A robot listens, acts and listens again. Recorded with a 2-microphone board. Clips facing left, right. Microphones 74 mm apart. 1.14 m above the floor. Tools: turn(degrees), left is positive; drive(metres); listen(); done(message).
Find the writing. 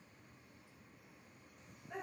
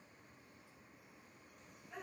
listen()
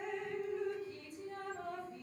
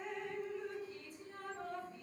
listen()
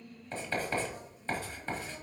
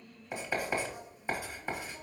turn(degrees=-30)
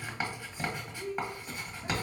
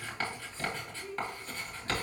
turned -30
turn(degrees=15)
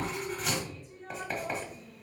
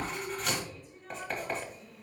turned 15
done("Found it: writing, straight ahead, 1 to 2 m away.")